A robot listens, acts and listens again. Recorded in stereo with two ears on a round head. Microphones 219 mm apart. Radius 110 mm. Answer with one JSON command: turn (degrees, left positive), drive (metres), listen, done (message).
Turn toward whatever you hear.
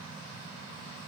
{"listen": true}
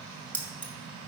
{"turn": 30}
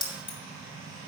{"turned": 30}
{"turn": 145}
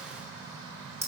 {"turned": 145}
{"turn": -10}
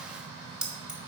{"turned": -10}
{"done": "Facing the keys jangling, 1 to 2 m away."}